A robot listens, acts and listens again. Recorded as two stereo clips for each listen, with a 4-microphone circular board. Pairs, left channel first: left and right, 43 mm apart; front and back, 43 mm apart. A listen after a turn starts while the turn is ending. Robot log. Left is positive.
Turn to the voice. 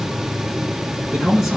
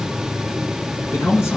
note: The man speaking: 10° right.
cmd yaw -10
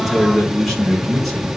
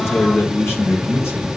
end: Found it: a man speaking, straight ahead, over 4 m away.